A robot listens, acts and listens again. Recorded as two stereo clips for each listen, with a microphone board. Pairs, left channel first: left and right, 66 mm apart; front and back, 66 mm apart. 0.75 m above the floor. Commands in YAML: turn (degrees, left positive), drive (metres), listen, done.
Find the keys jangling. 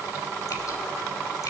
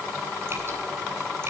listen: true
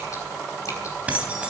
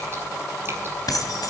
turn: -20
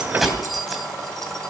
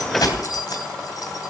done: "Facing the keys jangling."